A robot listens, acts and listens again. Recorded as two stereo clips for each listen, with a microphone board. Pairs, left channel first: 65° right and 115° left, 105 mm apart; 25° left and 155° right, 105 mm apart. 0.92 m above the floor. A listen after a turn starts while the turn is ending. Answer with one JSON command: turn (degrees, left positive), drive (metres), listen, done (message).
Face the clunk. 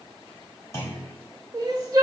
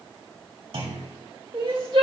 {"turn": -130}
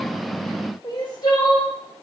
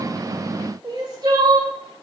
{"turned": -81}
{"turn": -50}
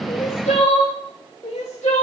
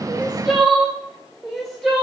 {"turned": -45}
{"done": "Facing where the clunk came from. I can't hear it now."}